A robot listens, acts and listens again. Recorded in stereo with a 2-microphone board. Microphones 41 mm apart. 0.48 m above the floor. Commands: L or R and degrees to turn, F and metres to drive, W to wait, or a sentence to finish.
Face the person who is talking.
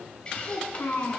L90
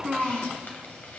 R15
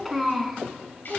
Found it: a child speaking, straight ahead, 2 to 4 m away.